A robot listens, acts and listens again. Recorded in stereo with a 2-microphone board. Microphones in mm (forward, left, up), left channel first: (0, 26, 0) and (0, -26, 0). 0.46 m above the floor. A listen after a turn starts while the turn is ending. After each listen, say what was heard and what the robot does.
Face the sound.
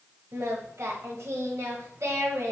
The singing: about 70° right or 110° right. Turn 70° right.
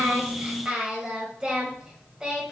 So it is at 15° right. Turn 15° right.
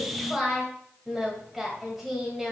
Facing the singing, 1 to 2 m away.